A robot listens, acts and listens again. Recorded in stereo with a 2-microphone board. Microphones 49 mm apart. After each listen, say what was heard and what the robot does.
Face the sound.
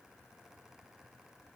Keep listening.
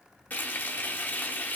The frying: about 40° left or 140° left. Turn 40° left.
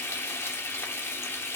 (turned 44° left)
So it is at 90° left. Turn 90° left.
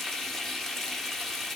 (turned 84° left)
The frying is now 10° left. Turn 10° left.
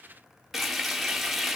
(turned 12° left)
Facing the frying.